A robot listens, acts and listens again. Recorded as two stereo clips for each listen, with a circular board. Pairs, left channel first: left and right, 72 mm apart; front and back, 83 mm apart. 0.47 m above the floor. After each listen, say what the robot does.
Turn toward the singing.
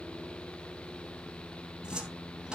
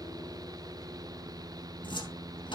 Keep listening.
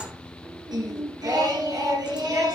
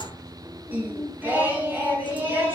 Turn 115° right.
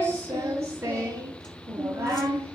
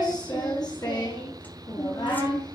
Turn 35° right.
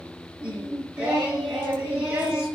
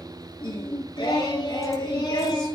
Turn 15° right.
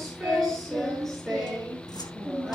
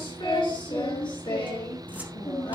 Facing the singing.